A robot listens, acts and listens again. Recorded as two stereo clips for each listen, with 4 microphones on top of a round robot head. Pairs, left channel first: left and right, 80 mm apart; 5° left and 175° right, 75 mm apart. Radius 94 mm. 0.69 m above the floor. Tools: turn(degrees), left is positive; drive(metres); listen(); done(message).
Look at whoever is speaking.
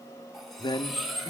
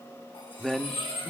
turn(degrees=90)
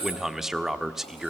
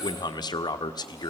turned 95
done("Found it: a man speaking, straight ahead, 1 to 2 m away.")